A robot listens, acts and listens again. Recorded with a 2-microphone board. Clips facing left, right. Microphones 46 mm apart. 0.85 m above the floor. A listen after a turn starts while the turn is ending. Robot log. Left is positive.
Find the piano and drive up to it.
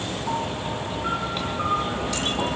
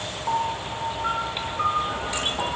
note: The piano: about 15° right or 165° right.
cmd yaw -15
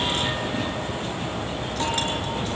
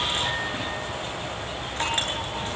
cmd idle
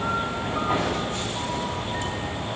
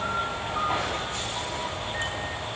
cmd idle
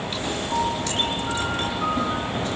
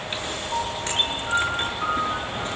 cmd fwd 1.0
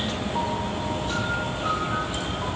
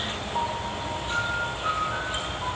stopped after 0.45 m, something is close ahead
end: Blocked. The piano is further on, straight ahead.